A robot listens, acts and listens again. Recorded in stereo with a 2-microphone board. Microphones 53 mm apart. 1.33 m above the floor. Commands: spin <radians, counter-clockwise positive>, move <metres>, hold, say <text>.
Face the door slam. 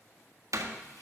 spin -1.31
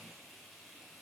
hold
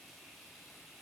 say I heard a door slam, but can't make it out now. It was about straight ahead or 30° right.